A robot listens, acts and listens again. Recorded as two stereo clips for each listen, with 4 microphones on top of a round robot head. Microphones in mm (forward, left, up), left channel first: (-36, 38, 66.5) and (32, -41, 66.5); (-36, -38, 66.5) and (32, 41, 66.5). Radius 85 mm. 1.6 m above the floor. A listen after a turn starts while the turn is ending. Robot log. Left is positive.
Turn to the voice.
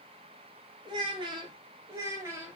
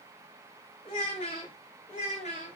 note: The child speaking: 120° right.
cmd yaw -120
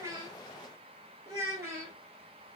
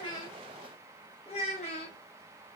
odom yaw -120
note: The child speaking is now 120° right.
cmd yaw -120
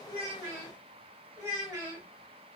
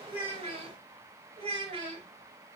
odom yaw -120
note: The child speaking is now 15° left.
cmd yaw +15
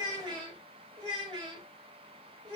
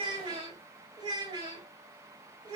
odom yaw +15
end: Facing the child speaking.